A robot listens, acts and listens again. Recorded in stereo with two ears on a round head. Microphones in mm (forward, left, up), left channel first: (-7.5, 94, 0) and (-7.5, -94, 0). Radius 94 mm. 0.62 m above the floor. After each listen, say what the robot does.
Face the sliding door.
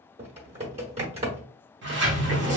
Turn 55° right.
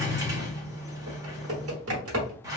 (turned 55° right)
Turn 20° right.
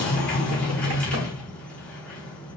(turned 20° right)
Facing the sliding door, under 1 m away.